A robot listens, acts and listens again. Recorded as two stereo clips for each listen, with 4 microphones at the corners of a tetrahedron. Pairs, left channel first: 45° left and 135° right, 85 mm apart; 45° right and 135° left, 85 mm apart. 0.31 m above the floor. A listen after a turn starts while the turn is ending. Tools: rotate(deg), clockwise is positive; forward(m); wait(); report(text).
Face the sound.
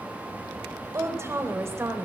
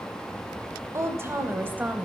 rotate(165)
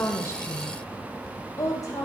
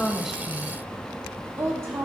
rotate(-85)
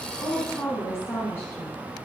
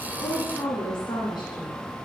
rotate(15)
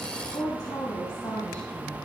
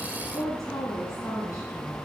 report("Facing the woman speaking, 2 to 4 m away.")